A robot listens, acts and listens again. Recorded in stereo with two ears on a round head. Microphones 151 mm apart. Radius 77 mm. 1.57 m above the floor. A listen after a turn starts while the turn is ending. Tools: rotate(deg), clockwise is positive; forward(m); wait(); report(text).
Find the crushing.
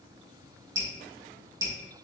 wait()
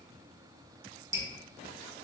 wait()
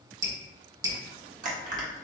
rotate(50)
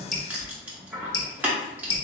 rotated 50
rotate(10)
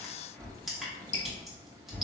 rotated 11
report("Facing the crushing.")